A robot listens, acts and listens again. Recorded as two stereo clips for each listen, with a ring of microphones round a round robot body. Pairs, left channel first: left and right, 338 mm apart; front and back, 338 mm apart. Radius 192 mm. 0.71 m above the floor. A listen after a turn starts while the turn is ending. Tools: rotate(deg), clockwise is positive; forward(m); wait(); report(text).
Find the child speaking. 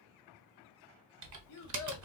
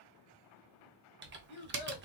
rotate(-55)
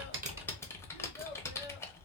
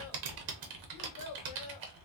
wait()
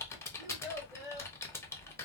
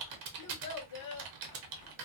rotate(10)
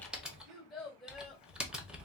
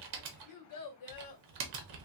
report("Facing the child speaking, 1 to 2 m away.")